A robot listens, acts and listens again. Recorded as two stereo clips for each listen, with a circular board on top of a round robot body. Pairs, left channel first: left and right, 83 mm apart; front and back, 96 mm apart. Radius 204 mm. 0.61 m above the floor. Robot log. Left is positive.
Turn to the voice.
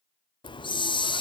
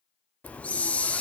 cmd idle
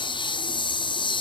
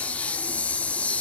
cmd idle
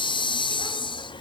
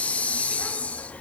end: I can't make out anyone speaking to turn to.